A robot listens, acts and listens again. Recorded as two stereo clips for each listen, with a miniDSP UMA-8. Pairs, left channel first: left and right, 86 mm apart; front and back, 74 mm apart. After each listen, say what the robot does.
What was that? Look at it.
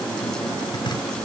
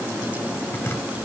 Keep listening.
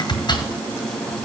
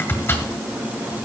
Turn 55° left.
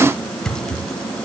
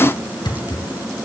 Found it: chopping, straight ahead, 1 to 2 m away.